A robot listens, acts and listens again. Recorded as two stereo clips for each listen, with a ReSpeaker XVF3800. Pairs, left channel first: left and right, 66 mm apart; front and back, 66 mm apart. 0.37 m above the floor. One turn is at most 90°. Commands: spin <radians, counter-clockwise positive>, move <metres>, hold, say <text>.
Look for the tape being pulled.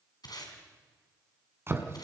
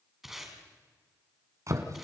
spin 1.57
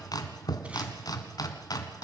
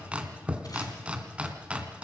hold
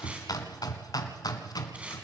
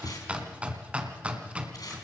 spin -0.35
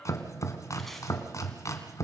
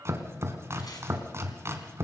hold
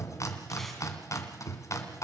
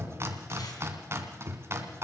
hold
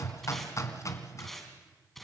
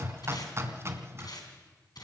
say Found it: tape being pulled, straight ahead.